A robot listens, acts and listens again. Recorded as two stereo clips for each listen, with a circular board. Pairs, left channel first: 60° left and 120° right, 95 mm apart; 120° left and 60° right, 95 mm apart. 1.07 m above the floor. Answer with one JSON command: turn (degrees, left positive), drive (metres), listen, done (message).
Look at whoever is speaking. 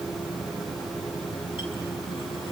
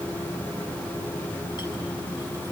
{"listen": true}
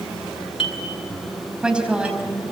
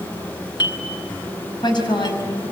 {"turn": 160}
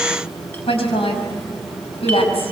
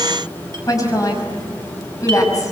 {"turn": 70}
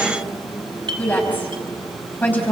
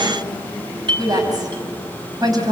{"turn": -10}
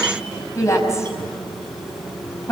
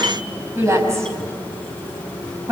{"done": "Facing the woman speaking."}